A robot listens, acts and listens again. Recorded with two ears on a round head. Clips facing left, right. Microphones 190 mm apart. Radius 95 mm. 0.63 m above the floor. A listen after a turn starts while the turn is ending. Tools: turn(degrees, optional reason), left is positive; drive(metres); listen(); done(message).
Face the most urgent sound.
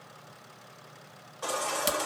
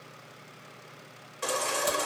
turn(degrees=-35, reason="The baby crying: about 35° right or 145° right.")
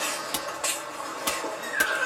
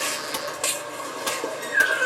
turn(degrees=-110, reason="So it is at 110° right.")
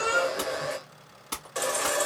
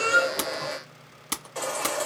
turn(degrees=20, reason="The baby crying is now 20° left.")
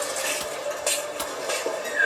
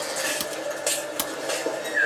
turn(degrees=-10, reason="The baby crying is now 10° right.")
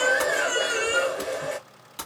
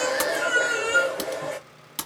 done("Found it: a baby crying, straight ahead.")